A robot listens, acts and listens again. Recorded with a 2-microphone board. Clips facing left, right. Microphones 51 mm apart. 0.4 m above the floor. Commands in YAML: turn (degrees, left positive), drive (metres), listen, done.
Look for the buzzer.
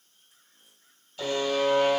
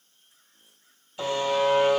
turn: -15
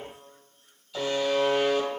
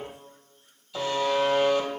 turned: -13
done: "Facing the buzzer."